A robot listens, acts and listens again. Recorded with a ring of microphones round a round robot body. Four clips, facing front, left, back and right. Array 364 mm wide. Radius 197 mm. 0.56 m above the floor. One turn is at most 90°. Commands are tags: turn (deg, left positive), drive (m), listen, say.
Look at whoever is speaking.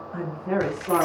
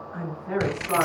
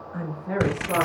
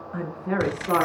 <turn deg="-55"/>
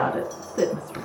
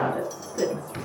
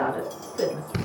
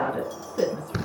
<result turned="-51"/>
<say>Found it: a woman speaking, straight ahead, over 4 m away.</say>